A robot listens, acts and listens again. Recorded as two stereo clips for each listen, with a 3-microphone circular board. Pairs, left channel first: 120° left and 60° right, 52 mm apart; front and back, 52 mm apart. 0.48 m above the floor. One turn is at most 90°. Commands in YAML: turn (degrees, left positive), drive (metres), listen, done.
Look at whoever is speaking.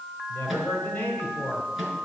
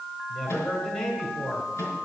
turn: 70
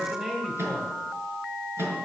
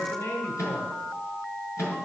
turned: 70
turn: 20
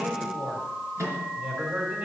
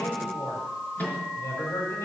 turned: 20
done: "Found it: a man speaking, straight ahead."